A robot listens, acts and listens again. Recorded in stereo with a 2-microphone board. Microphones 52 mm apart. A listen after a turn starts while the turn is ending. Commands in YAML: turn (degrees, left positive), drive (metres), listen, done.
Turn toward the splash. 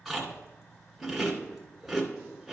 listen: true
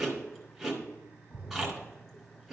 turn: 35
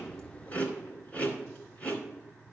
listen: true
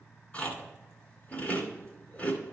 done: "I heard a splash, but can't make it out now. It was about straight ahead or 110° left."